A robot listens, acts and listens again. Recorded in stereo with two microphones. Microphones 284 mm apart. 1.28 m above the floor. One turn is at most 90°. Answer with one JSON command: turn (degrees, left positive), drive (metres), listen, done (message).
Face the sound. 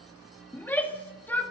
{"turn": 30}
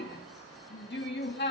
{"turn": 90}
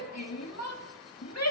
{"turn": 65}
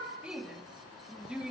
{"done": "Facing the shout, 2 to 4 m away."}